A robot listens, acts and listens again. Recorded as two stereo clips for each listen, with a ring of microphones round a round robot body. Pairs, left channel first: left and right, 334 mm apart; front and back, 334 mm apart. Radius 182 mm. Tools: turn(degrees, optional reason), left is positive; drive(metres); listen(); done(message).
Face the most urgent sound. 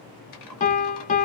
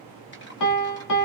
listen()
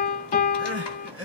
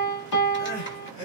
turn(degrees=-15, reason="The crying: 15° right.")
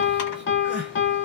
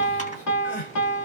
done("Found it: crying, straight ahead.")